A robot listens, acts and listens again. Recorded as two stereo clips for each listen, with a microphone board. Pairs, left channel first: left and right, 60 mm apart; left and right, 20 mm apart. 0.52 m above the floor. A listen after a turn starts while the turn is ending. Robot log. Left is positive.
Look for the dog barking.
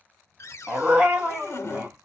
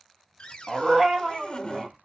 note: The dog barking: about 20° right or 160° right.
cmd yaw -20
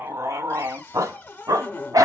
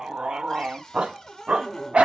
note: So it is at 95° right.
cmd yaw -95
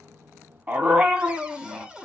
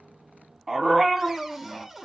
note: The dog barking is now 10° right.
cmd yaw -10
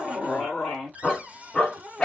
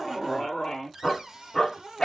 note: The dog barking is now 10° left.
cmd yaw +10
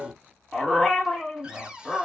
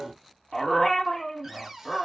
end: Facing the dog barking, 1 to 2 m away.